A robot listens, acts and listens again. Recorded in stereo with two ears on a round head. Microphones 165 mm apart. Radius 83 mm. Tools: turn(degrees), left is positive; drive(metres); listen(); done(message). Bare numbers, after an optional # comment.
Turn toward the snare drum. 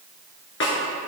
turn(90)
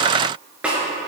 done("Found it: a snare drum, straight ahead, 2 to 4 m away.")